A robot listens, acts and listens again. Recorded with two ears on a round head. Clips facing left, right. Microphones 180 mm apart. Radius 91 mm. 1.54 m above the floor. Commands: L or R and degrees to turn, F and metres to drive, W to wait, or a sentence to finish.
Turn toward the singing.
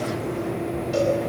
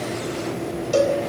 W
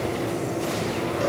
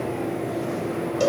W
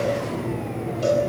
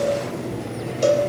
I can't make out singing, only a cowbell.